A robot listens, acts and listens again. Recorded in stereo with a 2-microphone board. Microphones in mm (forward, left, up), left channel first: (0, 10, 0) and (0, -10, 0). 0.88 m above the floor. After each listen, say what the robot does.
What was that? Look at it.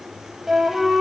Turn 25° right.
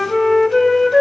Facing the flute.